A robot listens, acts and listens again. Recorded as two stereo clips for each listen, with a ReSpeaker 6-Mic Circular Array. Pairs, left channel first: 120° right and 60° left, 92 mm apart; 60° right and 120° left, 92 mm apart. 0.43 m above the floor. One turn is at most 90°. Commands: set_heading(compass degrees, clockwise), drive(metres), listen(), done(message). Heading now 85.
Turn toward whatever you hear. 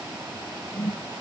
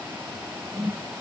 set_heading(355)
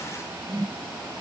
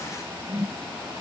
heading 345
set_heading(265)
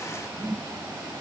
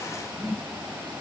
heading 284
set_heading(264)
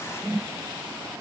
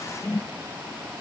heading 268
done("Found it: a whoosh, straight ahead.")